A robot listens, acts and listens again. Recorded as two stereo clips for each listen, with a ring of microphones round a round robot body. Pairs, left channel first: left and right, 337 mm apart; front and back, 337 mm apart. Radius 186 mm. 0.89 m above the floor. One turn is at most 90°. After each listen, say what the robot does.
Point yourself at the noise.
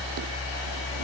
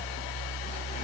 Keep listening.
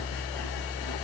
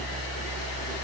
Keep listening.
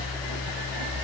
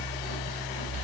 I can't make out anything to turn to.